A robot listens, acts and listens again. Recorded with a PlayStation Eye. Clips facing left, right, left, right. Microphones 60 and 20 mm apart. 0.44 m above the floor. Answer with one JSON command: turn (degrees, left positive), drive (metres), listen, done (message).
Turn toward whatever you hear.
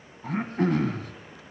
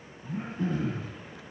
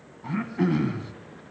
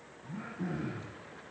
{"turn": 90}
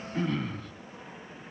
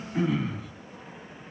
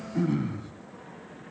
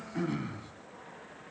{"done": "Facing the throat clearing."}